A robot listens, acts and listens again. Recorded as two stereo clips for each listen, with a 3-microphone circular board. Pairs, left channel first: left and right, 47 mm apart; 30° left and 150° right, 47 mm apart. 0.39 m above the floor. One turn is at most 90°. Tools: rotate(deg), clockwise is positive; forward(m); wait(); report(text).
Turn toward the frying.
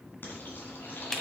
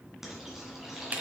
rotate(-90)
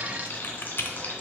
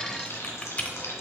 rotate(-40)
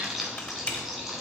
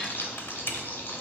rotate(10)
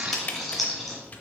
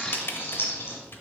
report("Found it: frying, straight ahead, 2 to 4 m away.")